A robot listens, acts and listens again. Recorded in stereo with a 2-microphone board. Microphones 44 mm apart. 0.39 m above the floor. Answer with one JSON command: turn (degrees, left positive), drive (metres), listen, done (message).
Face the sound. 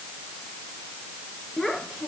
{"turn": 30}
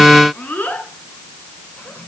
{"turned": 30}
{"turn": 140}
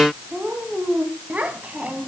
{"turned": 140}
{"turn": -40}
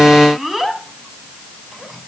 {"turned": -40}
{"done": "Facing the child speaking."}